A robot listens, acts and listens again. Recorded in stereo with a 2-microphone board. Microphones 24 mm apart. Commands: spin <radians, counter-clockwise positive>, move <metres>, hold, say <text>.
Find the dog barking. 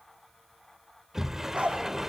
spin -0.79
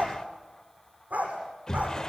spin -1.57
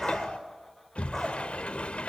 say Found it: a dog barking, straight ahead.